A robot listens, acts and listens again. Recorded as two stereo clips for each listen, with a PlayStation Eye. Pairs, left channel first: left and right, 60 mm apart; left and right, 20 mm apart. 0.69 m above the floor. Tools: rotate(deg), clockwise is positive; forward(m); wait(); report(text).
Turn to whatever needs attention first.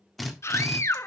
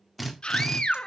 rotate(-50)
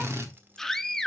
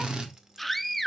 rotate(-10)
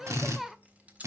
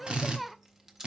report("Found it: a scream, straight ahead.")